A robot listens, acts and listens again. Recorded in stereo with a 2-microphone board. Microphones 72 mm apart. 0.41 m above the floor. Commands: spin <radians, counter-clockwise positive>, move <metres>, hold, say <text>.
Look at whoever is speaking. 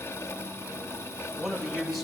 spin 0.52
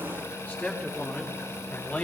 spin 2.62
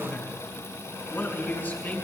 spin 0.44
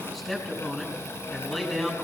say Facing the man speaking.